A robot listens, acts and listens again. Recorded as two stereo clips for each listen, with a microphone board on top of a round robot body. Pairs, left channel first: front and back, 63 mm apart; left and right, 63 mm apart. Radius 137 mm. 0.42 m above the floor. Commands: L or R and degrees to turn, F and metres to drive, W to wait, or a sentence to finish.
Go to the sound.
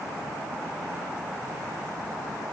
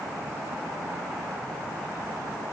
W
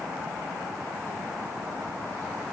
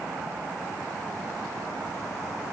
W
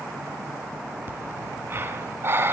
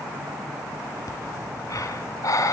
L125
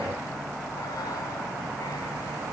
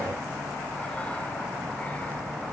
W
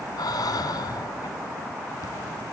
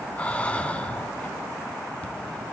L20
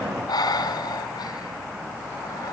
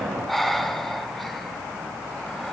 F1.0
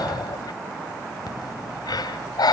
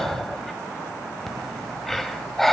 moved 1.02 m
F1.0
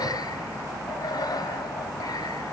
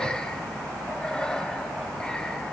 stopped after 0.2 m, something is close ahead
L15
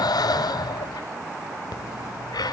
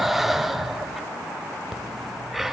I am next to the breathing.